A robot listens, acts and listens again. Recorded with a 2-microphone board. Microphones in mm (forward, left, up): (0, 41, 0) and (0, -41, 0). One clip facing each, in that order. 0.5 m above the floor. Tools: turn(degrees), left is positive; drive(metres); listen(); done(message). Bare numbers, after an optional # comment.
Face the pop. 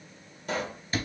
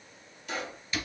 # The pop: about 45° left or 135° left.
turn(45)
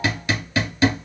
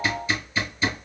listen()
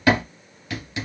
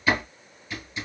done("I heard a pop, but can't make it out now. It was about straight ahead or 90° left.")